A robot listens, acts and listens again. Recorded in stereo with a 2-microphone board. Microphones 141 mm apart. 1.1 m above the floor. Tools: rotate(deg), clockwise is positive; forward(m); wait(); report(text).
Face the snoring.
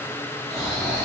rotate(25)
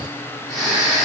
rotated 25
report("Found it: snoring, straight ahead.")